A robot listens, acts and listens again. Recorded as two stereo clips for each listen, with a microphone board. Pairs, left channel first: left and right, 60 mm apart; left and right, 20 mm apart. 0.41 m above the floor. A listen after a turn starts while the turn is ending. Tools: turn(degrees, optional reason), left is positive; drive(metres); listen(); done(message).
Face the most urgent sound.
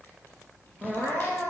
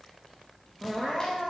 turn(degrees=35, reason="The crying: about 35° left or 145° left.")
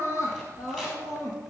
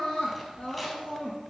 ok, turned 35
turn(degrees=110, reason="So it is at 110° left.")
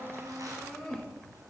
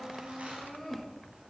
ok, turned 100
turn(degrees=10, reason="The crying is now 10° left.")
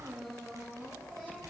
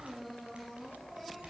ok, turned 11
done("Facing the crying, 2 to 4 m away.")